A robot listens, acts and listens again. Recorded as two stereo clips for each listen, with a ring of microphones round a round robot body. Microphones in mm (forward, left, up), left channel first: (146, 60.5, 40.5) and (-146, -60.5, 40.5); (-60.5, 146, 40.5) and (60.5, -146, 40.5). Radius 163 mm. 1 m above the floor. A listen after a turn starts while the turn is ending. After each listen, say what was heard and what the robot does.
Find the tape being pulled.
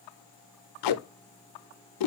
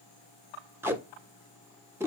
The tape being pulled: 15° left. Turn 15° left.
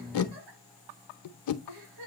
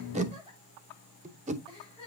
Facing the tape being pulled.